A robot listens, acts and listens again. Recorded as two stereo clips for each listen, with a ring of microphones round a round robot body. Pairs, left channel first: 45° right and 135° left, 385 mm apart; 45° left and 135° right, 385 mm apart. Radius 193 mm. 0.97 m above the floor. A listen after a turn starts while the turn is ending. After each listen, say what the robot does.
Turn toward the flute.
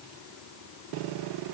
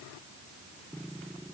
Keep listening.
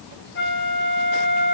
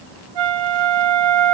Turn 110° right.
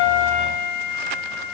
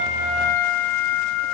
Turn 10° left.
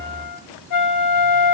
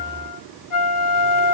Facing the flute.